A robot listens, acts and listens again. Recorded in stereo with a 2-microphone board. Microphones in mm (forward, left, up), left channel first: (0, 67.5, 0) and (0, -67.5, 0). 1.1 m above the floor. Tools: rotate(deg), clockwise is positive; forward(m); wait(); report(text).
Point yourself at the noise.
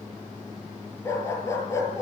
rotate(-20)
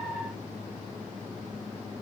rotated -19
wait()
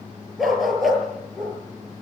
report("Found it: a dog barking, straight ahead.")